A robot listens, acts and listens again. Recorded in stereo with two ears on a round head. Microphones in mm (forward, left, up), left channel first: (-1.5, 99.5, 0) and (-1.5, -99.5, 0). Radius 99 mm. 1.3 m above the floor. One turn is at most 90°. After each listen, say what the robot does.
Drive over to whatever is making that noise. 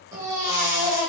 Turn 15° right.
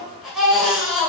Drive 1.0 m forward.
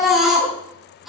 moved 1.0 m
Drive 1.0 m forward.
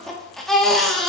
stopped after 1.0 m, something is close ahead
Arrived at the baby crying, straight ahead.